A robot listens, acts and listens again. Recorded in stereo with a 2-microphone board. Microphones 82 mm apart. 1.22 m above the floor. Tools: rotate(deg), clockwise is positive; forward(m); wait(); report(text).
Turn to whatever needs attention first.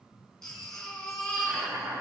rotate(-30)
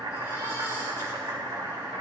wait()
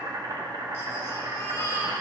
rotate(-145)
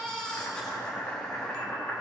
rotate(-10)
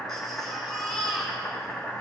report("Found it: a baby crying, straight ahead.")